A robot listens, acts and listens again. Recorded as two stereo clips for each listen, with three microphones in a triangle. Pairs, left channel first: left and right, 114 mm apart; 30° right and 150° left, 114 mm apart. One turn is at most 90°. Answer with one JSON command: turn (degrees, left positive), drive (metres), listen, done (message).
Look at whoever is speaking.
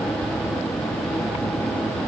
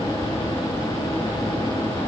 {"listen": true}
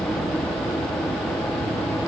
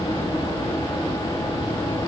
{"listen": true}
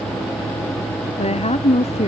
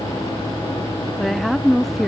{"turn": 60}
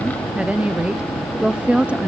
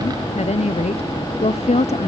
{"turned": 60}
{"turn": -10}
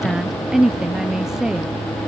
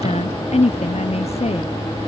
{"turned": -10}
{"done": "Found it: a woman speaking, straight ahead."}